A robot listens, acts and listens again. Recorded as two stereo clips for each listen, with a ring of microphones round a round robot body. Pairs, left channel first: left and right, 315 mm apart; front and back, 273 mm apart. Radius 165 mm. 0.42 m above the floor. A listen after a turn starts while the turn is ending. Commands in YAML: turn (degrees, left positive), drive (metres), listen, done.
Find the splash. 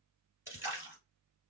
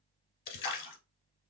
done: "Found it: a splash, straight ahead, 1 to 2 m away."